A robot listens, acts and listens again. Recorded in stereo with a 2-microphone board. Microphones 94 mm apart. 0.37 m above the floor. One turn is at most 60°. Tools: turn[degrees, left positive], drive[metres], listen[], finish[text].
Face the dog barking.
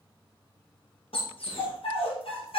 Action: turn[60]
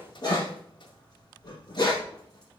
Thought: So it is at 45° left.
Action: turn[45]
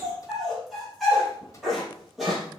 Action: finish[Facing the dog barking, 2 to 4 m away.]